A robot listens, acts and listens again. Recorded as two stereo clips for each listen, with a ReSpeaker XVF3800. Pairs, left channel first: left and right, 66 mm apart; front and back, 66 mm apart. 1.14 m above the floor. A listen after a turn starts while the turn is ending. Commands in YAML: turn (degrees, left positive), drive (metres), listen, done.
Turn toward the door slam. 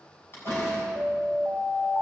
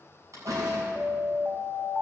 turn: 145
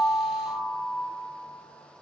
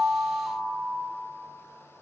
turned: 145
done: "Facing where the door slam came from. I can't hear it now."